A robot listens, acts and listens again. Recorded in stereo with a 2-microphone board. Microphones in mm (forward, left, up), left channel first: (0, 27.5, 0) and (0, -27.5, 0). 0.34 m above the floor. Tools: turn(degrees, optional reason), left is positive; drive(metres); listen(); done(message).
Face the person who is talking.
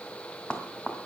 listen()
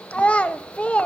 turn(degrees=25, reason="The child speaking: about 25° left or 155° left.")
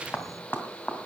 listen()
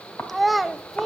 done("Found it: a child speaking, straight ahead, under 1 m away.")